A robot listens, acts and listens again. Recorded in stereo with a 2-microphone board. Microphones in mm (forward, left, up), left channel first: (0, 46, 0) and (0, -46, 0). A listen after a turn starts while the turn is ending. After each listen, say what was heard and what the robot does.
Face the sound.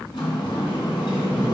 The sliding door: about 70° left or 110° left. Turn 70° left.
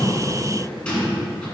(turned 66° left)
So it is at 15° left. Turn 15° left.
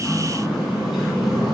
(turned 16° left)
Found it: a sliding door, straight ahead, 2 to 4 m away.